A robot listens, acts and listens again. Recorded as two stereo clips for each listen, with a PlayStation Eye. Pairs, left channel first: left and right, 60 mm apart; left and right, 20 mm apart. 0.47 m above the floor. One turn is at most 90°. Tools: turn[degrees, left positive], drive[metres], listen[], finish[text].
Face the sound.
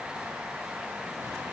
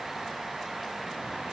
Action: listen[]
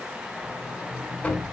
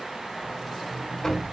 Thought: The sliding door: about 25° left or 155° left.
Action: turn[25]
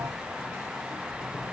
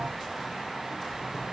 Action: finish[Facing the sliding door, 2 to 4 m away.]